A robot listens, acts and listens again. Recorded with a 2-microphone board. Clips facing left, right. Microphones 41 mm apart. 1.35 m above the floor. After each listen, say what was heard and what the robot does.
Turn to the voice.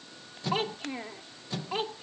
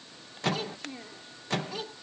The child speaking: about 40° left or 140° left. Turn 40° left.
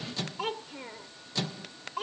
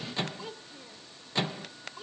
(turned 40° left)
So it is at 105° left. Turn 105° left.
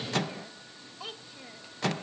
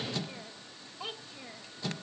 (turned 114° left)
The child speaking is now 10° right. Turn 10° right.
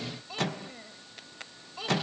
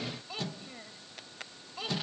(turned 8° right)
Facing the child speaking.